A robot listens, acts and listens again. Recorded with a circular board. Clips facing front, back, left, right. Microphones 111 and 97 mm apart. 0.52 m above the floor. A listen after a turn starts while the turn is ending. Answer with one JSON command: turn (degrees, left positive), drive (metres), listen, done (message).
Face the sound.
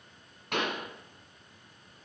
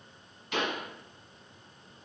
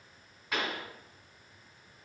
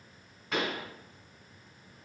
{"done": "Found it: a pop, straight ahead."}